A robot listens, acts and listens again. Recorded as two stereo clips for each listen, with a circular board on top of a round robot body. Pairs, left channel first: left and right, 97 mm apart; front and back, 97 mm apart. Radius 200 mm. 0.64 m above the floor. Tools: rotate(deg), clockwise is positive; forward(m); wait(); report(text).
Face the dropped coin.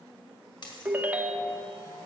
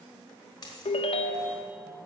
rotate(-50)
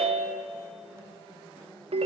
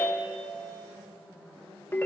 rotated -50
report("Facing where the dropped coin came from. I can't hear it now.")